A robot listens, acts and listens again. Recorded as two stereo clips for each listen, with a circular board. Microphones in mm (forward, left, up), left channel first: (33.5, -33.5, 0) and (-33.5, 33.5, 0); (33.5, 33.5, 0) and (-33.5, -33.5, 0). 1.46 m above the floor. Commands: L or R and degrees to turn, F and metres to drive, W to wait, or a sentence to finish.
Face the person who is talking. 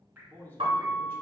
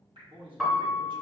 R110
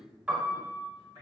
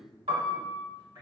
R40
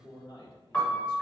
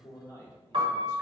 R10
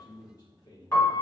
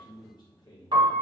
Found it: a man speaking, straight ahead, 1 to 2 m away.